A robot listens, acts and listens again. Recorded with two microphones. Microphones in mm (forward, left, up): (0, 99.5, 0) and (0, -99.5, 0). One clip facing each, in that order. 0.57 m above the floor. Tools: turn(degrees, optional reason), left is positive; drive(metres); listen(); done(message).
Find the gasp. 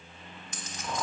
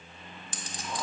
listen()
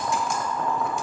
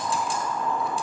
listen()
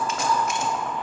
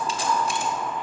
done("I can't make out a gasp to turn to.")